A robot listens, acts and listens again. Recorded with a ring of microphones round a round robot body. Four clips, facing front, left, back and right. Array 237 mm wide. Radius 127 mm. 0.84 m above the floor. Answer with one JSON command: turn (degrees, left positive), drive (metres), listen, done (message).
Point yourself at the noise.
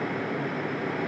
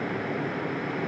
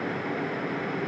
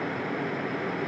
{"listen": true}
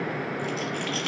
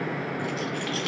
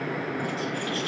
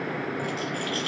{"turn": 35}
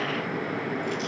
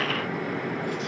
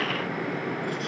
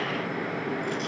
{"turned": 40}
{"listen": true}
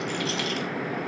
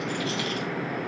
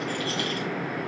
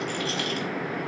{"done": "Facing the rattle."}